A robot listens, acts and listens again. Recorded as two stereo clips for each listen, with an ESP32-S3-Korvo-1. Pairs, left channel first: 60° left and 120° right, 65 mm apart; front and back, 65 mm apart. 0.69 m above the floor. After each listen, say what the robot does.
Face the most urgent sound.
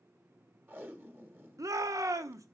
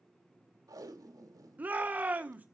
Turn 120° right.
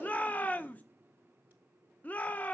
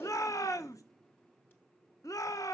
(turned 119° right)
Facing the shout, under 1 m away.